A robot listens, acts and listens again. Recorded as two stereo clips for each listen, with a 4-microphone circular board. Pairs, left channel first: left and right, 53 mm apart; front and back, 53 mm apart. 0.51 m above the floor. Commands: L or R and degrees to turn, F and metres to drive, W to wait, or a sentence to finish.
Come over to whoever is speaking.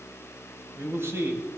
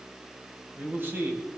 R130
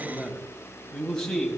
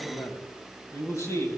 L15
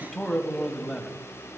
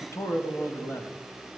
F1.0
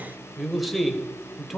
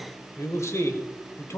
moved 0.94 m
F1.0
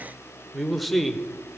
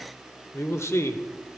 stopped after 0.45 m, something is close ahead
Arrived at the man speaking, straight ahead.